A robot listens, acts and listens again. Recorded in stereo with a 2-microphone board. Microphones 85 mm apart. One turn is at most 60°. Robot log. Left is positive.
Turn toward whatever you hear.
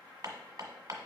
note: The hammering: about 45° right or 135° right.
cmd yaw -45
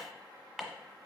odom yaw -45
end: Facing the hammering.